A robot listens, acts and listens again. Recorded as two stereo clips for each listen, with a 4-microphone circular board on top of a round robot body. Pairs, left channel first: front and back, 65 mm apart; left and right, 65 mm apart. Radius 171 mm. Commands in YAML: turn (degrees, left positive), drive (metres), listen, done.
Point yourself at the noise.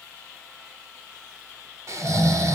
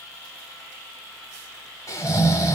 turn: 135
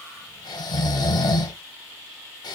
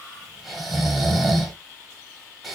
done: "Found it: snoring, straight ahead."